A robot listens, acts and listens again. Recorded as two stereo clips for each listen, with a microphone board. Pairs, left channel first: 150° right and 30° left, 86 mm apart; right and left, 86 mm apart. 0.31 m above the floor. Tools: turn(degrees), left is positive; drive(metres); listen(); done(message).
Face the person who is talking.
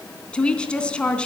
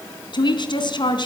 turn(degrees=-75)
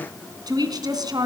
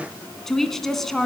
done("Facing the woman speaking.")